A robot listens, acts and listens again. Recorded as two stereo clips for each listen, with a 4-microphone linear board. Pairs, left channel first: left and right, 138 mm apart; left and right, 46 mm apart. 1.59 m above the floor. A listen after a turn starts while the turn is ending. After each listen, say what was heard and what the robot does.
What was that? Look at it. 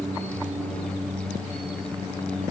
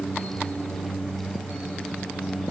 Keep listening.
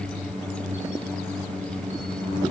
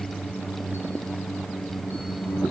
Keep listening.
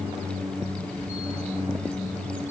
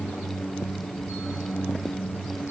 I can't make out anything.